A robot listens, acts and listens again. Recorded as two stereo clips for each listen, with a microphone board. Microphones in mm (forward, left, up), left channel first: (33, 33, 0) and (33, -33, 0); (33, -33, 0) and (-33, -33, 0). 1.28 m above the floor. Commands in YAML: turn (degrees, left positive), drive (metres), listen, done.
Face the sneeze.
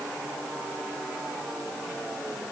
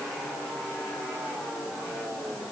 listen: true
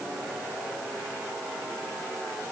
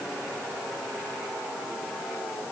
listen: true
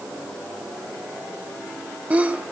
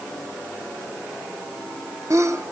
turn: -155
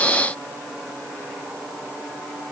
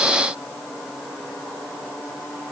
done: "I heard a sneeze from this way, but can't make it out now."